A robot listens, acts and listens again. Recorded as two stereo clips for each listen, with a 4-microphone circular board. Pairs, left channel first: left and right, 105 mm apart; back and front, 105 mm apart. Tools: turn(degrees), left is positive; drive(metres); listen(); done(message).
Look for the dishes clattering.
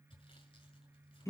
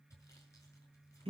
listen()
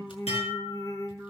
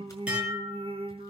turn(degrees=80)
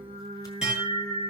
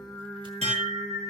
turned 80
done("Found it: dishes clattering, straight ahead.")